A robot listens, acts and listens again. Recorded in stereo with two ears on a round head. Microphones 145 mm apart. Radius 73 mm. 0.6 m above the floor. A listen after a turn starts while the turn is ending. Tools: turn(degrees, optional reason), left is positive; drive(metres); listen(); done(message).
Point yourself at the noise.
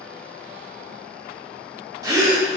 turn(degrees=-20, reason="The gasp: about 20° right or 160° right.")
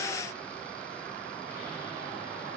listen()
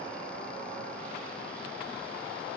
done("I heard a gasp, but can't make it out now. It was about straight ahead or 140° right.")